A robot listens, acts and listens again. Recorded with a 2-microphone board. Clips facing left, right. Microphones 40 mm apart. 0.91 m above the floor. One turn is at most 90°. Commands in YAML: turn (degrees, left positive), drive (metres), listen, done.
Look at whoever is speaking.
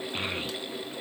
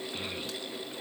turn: 65
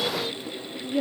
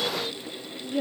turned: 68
done: "Facing the child speaking, under 1 m away."